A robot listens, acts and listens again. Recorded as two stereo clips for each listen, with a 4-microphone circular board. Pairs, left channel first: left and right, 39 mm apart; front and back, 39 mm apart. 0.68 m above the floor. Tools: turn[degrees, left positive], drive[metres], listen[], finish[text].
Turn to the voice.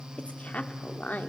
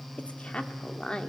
Thought: The woman speaking: 60° left.
Action: turn[60]
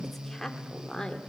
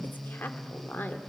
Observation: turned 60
Thought: The woman speaking is now 20° left.
Action: turn[20]
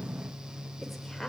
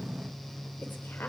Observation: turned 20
Action: listen[]
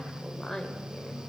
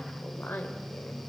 Thought: The woman speaking is now 15° left.
Action: turn[15]
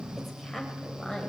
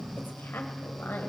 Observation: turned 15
Action: finish[Found it: a woman speaking, straight ahead.]